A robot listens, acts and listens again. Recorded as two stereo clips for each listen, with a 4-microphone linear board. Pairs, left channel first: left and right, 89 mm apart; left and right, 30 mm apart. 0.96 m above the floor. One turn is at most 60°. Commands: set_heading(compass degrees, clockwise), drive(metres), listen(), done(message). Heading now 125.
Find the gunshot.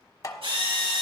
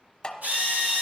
listen()
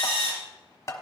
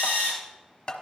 listen()
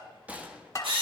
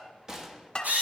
set_heading(140)
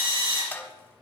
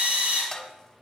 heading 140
listen()
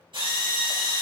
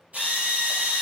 done("I heard a gunshot, but can't make it out now. It was about straight ahead or 150° right.")